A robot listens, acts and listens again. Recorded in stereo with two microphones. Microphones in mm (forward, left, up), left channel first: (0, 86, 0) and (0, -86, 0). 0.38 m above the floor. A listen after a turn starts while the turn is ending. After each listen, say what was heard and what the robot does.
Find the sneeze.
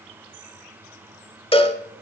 Keep listening.
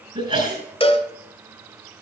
The sneeze: about 40° right or 140° right. Turn 40° right.
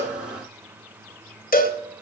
Keep listening.
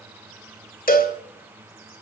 I heard a sneeze, but can't make it out now. It was about straight ahead or 100° right.